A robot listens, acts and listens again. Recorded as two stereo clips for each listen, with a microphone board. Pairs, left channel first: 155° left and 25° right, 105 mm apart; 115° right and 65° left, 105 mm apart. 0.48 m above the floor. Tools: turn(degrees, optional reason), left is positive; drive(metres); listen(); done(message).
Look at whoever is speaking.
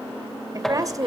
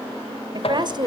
turn(degrees=30, reason="The woman speaking: 30° left.")
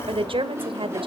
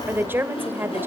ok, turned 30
done("Facing the woman speaking.")